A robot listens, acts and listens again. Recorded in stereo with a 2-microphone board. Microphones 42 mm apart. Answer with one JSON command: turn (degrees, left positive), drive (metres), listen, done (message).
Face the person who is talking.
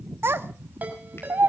{"turn": -70}
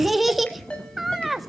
{"done": "Found it: a child speaking, straight ahead, 1 to 2 m away."}